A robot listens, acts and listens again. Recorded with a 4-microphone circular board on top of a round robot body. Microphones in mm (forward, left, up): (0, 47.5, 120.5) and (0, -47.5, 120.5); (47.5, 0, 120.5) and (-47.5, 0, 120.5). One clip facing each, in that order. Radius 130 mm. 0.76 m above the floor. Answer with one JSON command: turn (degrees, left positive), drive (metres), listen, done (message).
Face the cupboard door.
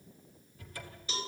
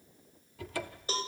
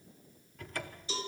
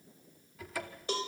{"turn": -95}
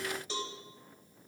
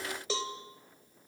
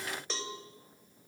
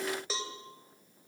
{"listen": true}
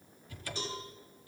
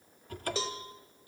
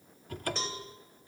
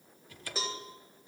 {"turn": -45}
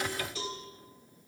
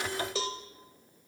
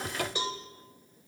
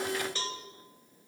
{"listen": true}
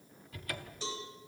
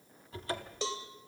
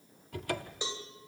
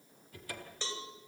{"turn": -25}
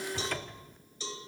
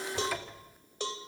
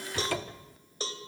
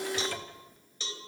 {"done": "Facing the cupboard door."}